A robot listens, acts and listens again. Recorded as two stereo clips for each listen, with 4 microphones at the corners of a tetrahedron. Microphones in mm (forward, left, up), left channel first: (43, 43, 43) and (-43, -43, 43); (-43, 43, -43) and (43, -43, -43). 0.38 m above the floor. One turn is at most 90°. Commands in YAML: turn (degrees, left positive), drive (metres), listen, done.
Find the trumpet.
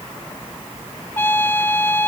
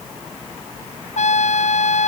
turn: 90
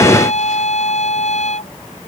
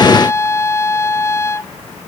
turn: 65
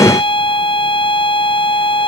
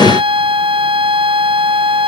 done: "Found it: a trumpet, straight ahead."